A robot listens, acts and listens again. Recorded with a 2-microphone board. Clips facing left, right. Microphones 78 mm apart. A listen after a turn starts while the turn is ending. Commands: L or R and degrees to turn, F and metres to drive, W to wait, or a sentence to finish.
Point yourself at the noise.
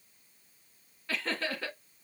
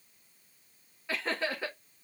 R20
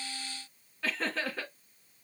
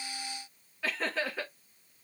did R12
Facing the laughter, 1 to 2 m away.